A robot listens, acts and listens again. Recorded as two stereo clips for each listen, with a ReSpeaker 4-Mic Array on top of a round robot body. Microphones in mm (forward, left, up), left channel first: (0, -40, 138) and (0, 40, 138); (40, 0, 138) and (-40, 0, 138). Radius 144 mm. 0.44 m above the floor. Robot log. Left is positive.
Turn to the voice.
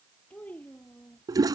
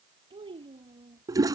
note: The child speaking: 165° right.
cmd yaw -165
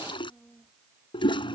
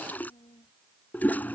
note: The child speaking is now 10° right.
cmd yaw -10
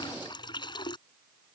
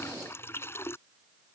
cmd idle
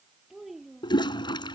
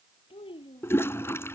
end: Found it: a child speaking, straight ahead.